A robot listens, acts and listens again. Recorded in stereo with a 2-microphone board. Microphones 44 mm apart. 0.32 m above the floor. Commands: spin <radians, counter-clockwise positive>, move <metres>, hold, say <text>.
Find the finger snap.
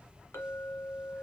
hold
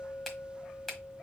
spin 0.52
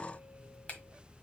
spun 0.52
spin 2.44
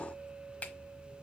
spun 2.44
spin 0.70
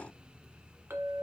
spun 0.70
hold
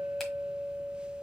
hold
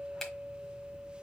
say Facing where the finger snap came from. I can't hear it now.